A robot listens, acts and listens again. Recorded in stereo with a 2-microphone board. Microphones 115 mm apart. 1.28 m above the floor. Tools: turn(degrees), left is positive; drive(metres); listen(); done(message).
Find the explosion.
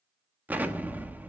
turn(degrees=-15)
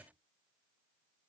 listen()
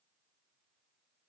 done("I heard an explosion, but can't make it out now. It was about straight ahead or 150° right.")